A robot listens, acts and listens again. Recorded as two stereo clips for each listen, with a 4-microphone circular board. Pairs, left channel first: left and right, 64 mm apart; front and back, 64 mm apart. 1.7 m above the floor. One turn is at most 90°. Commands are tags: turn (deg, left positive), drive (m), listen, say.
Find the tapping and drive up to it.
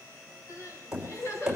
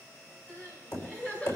<turn deg="-15"/>
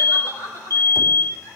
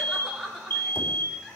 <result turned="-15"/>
<listen/>
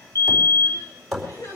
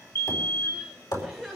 <drive m="1.0"/>
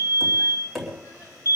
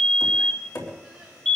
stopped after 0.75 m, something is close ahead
<say>Blocked. The tapping is further on, straight ahead.</say>